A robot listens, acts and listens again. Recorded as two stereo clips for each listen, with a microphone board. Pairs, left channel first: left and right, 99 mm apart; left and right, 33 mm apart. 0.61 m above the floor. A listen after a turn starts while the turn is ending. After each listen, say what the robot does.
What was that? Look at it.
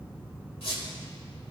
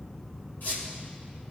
Turn 90° left.
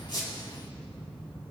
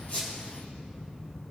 Keep listening.
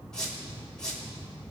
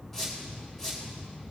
Turn 10° left.
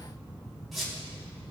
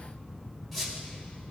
Found it: a squeak, straight ahead, 2 to 4 m away.